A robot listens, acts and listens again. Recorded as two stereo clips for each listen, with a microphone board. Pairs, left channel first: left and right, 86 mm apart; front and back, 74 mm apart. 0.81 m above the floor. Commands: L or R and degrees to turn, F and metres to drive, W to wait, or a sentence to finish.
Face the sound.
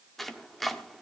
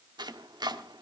L180
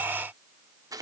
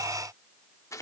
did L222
R45
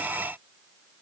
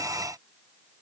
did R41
W
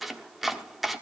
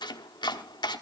Facing the chopping.